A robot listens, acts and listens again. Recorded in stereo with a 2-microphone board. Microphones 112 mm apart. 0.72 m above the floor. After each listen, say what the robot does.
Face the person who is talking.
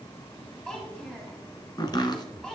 Turn 30° left.
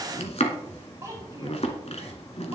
Turn 30° right.
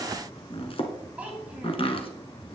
Turn 15° right.
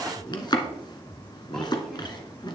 Keep listening.
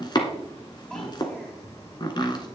Keep listening.
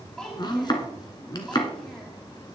Found it: a child speaking, straight ahead, 2 to 4 m away.